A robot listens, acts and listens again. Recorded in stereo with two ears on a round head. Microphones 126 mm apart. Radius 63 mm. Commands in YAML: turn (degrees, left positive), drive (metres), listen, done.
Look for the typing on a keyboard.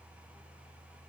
listen: true
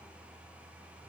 listen: true
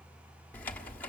turn: 30
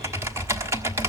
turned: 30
turn: -20
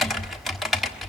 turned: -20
done: "Facing the typing on a keyboard."